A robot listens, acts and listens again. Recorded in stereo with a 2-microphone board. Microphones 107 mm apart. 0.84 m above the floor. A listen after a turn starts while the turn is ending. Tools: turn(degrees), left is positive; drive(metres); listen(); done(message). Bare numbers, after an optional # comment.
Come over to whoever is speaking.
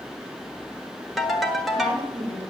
turn(-90)
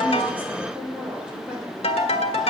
drive(1.0)
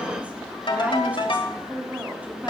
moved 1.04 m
# The woman speaking is now 10° right.
turn(-10)
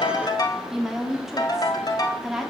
drive(1.0)
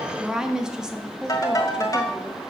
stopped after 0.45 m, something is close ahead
done("Arrived at the woman speaking, straight ahead.")